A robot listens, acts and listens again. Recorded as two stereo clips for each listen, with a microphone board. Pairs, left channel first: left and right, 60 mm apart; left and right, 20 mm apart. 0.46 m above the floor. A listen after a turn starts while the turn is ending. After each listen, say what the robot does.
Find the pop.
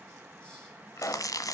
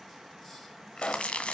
Turn 60° left.
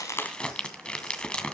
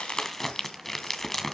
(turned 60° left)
Keep listening.
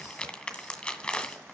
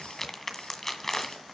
I heard a pop, but can't make it out now. It was about straight ahead or 60° left.